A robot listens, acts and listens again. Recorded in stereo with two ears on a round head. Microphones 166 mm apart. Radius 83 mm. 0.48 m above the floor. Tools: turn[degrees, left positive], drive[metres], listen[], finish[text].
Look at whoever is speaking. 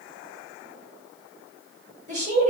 Thought: The woman speaking: about 40° right or 140° right.
Action: turn[-40]
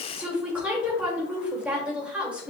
Thought: So it is at 10° right.
Action: turn[-10]
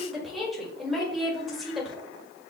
Action: finish[Facing the woman speaking.]